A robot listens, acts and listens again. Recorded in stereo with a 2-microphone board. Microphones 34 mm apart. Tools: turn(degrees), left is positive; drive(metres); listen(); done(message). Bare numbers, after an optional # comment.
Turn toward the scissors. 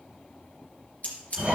# The scissors: about 45° left or 135° left.
turn(45)
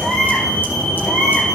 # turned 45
listen()
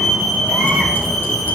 listen()
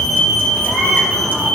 done("I heard scissors, but can't make it out now. It was about straight ahead or 90° left.")